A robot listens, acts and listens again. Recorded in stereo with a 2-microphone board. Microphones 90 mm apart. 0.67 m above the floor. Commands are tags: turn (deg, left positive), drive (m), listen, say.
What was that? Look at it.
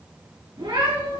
<turn deg="-60"/>
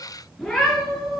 <say>Facing the cat meowing, over 4 m away.</say>